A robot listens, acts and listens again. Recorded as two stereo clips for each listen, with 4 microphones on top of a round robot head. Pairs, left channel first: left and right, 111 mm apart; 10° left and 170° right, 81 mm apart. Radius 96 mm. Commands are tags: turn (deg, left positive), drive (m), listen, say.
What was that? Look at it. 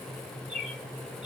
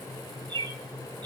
<turn deg="-175"/>
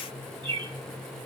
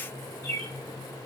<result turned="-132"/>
<turn deg="-45"/>
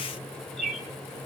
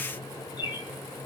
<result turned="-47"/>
<say>Facing the bird.</say>